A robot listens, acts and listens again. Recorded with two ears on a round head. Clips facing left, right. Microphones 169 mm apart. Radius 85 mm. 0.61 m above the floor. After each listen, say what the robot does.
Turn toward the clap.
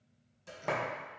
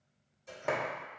Turn 30° left.
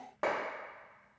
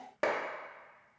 Turn 35° right.
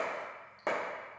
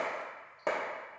Found it: a clap, straight ahead.